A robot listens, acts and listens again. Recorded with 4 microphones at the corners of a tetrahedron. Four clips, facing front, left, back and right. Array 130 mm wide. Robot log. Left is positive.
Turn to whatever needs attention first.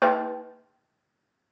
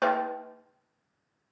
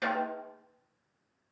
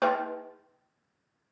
cmd idle
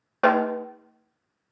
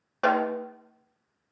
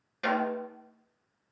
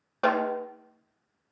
cmd idle
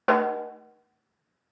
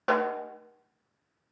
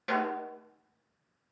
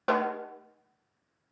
end: I can't make out anything urgent to turn to.